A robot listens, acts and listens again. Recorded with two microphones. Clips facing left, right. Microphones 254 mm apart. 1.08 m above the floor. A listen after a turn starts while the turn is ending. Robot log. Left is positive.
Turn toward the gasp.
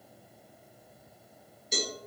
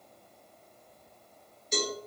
cmd idle
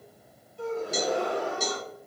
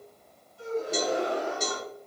note: The gasp: about 60° left or 120° left.
cmd yaw +60
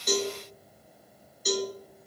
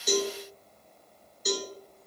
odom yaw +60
cmd idle
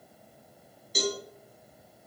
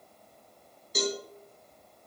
end: I heard a gasp, but can't make it out now. It was about straight ahead or 60° left.